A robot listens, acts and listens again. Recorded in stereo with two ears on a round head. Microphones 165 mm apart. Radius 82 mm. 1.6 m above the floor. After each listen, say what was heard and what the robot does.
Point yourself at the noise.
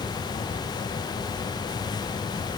Keep listening.
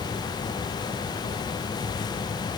Keep listening.
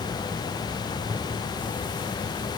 I can't make out anything to turn to.